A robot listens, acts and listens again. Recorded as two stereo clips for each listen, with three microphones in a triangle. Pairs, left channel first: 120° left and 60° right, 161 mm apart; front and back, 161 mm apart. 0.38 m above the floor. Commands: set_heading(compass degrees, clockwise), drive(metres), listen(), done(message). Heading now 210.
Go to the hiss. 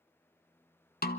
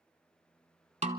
listen()
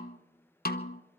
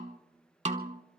listen()
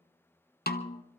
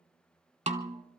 done("I can't make out a hiss to turn to.")